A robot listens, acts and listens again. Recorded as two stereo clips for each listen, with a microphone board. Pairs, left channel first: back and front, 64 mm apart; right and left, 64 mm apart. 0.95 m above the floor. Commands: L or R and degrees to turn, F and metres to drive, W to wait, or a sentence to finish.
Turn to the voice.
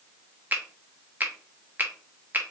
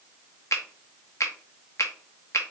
W
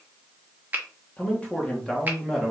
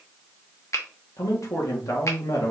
R95
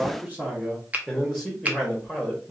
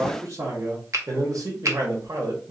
L80
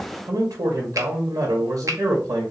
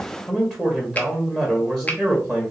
R10
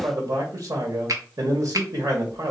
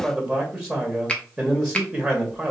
Facing the man speaking, 1 to 2 m away.